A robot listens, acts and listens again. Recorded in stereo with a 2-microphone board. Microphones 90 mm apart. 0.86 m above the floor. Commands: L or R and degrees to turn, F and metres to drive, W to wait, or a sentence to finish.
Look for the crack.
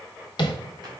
W
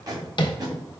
W
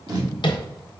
I can't make out a crack, only tape being pulled and tapping.